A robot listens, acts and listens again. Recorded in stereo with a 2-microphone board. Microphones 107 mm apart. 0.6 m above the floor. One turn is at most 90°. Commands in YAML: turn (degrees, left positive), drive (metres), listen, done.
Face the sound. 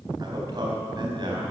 turn: -40
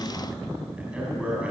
turn: -10
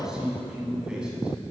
done: "Facing the man speaking."